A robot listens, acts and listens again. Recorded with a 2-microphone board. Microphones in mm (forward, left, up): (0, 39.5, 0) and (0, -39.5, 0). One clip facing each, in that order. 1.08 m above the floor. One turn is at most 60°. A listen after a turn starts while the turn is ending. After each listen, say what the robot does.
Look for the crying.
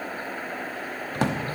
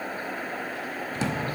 Keep listening.
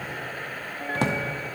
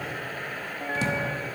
Keep listening.
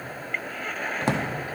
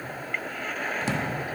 I can't make out crying, only a drawer.